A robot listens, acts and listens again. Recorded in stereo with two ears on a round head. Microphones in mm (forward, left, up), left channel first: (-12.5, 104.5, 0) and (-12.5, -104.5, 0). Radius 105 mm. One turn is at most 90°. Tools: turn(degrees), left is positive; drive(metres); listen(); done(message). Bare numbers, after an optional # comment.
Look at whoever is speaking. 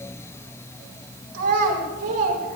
# The child speaking: about 70° right or 110° right.
turn(-70)
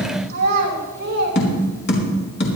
# So it is at 40° right.
turn(-40)
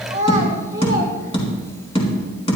# The child speaking is now 15° right.
turn(-15)
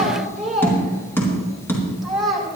done("Found it: a child speaking, straight ahead, over 4 m away.")